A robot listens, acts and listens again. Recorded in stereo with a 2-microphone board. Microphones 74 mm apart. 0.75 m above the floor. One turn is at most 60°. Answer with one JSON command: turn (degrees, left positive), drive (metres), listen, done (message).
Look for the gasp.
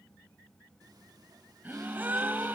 {"turn": -25}
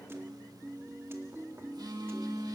{"listen": true}
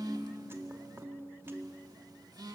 {"done": "I heard a gasp, but can't make it out now. It was about straight ahead or 130° right."}